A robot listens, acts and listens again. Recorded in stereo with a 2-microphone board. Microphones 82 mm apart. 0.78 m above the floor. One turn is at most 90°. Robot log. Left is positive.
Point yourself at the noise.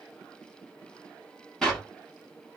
cmd yaw +30
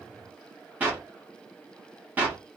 note: So it is at 20° right.
cmd yaw -20
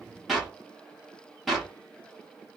end: Found it: a clap, straight ahead.